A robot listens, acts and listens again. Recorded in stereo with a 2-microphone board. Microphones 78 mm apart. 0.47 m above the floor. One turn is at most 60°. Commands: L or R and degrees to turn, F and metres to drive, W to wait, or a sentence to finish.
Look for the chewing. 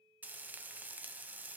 W
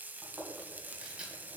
R15
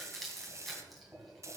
Found it: chewing, straight ahead.